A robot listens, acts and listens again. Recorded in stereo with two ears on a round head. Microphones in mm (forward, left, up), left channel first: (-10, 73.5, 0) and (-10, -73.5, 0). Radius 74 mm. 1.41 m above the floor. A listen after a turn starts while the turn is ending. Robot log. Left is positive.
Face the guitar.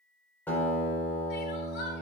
cmd yaw +30
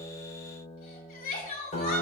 note: So it is at 135° left.
cmd yaw +135
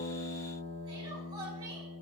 note: The guitar is now 45° left.
cmd yaw +45
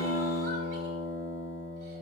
end: Found it: a guitar, straight ahead.